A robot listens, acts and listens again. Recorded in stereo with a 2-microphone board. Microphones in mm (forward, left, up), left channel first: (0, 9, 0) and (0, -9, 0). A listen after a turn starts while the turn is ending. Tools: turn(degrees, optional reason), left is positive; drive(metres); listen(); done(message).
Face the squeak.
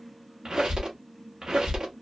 turn(degrees=-55, reason="The squeak: about 55° right or 125° right.")
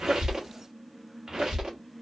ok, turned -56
turn(degrees=-60, reason="So it is at 60° right.")
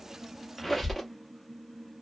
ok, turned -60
done("Facing the squeak.")